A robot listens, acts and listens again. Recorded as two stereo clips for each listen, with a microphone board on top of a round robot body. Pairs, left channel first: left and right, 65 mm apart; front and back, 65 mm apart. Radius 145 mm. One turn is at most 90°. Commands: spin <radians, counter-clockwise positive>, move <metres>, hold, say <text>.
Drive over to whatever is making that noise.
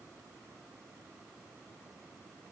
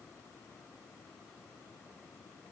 hold
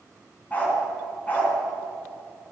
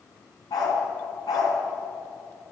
spin 0.44
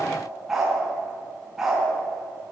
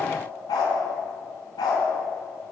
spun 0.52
move 1.0
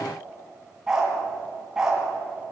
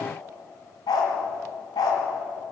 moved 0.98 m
spin -0.17
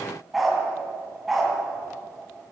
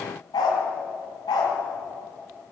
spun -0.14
move 1.0
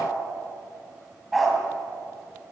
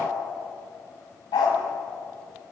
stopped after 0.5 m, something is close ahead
say Something is in my way. I am facing the dog barking but have not reached it.